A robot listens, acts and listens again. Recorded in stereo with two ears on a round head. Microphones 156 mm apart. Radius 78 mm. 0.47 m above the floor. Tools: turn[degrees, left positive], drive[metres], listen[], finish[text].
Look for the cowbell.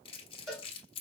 Action: turn[30]
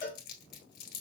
Thought: So it is at 150° left.
Action: turn[150]
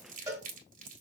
Thought: The cowbell is now 20° right.
Action: turn[-20]
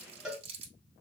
Action: finish[Found it: a cowbell, straight ahead, 1 to 2 m away.]